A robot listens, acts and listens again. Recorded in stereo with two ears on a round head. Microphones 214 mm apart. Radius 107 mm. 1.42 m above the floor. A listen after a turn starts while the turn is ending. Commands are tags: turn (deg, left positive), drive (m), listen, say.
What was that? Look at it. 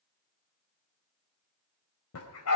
<turn deg="70"/>
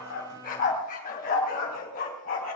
<turn deg="35"/>
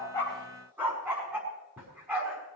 <turn deg="-10"/>
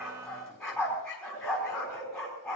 <say>Found it: a dog barking, straight ahead.</say>